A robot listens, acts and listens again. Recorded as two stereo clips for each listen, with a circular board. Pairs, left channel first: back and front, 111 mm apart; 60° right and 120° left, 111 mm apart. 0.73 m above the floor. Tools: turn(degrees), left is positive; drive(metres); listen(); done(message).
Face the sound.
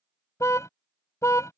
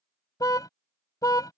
turn(degrees=-115)
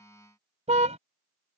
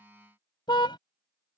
turn(degrees=-10)
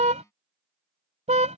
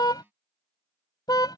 done("Found it: a car horn, straight ahead.")